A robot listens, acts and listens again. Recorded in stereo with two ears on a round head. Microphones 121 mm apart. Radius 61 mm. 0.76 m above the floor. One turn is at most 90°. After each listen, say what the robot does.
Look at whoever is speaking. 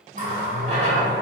Keep listening.
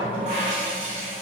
Keep listening.
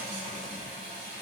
I can't make out anyone speaking to turn to.